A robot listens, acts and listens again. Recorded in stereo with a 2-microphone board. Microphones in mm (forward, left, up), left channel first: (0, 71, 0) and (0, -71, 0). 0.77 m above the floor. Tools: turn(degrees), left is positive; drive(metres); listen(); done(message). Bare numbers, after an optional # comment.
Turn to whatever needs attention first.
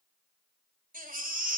turn(-90)
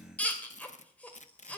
# So it is at 10° left.
turn(10)
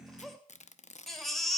done("Facing the baby crying.")